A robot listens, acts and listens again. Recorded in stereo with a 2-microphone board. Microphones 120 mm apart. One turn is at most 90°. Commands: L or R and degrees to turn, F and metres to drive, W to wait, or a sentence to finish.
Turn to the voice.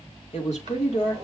L70
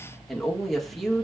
Facing the woman speaking.